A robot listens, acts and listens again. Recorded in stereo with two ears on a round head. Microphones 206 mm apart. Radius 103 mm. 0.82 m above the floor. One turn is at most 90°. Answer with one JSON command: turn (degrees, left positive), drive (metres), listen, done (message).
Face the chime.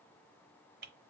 {"listen": true}
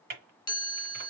{"turn": 20}
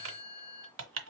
{"turn": 90}
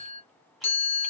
{"turn": 30}
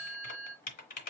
{"turn": -10}
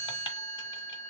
{"done": "Found it: a chime, straight ahead, 1 to 2 m away."}